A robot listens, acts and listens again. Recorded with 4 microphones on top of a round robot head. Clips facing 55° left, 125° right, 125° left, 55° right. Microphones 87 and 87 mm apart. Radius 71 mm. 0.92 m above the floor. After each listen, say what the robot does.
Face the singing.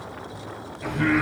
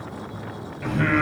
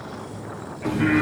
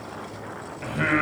Turn 85° right.
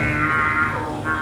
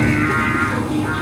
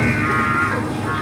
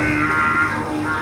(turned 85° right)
Turn 15° right.
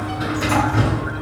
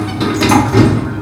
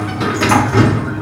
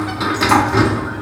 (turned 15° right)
Keep listening.
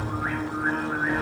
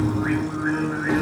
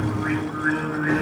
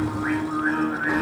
Facing the singing.